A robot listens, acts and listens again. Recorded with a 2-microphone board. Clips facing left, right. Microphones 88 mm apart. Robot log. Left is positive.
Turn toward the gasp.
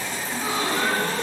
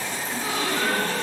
note: The gasp: about 30° left or 150° left.
cmd yaw +30
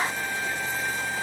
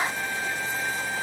cmd idle
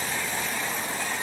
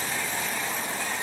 end: I heard a gasp, but can't make it out now. It was about straight ahead or 120° left.